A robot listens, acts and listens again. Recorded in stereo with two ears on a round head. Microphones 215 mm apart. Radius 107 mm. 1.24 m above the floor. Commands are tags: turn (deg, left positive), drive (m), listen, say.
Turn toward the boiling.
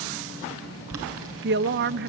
<turn deg="-65"/>
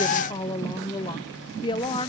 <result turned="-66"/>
<listen/>
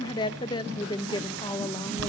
<turn deg="-50"/>
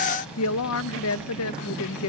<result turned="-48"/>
<listen/>
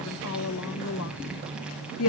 <listen/>
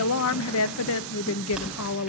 <say>Facing the boiling, over 4 m away.</say>